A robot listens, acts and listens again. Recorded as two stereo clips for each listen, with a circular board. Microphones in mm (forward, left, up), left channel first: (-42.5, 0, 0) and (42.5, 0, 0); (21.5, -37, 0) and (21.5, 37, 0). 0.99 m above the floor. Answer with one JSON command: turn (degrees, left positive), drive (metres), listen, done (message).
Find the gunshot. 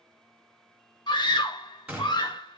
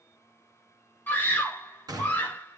{"turn": 75}
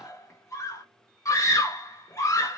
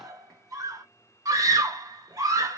{"done": "I heard a gunshot from this way, but can't make it out now."}